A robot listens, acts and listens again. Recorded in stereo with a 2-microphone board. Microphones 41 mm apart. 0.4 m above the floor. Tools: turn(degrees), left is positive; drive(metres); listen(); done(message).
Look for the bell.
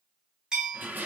turn(degrees=-20)
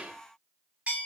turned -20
turn(degrees=-135)
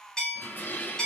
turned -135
turn(degrees=25)
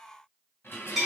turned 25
done("Facing the bell, 1 to 2 m away.")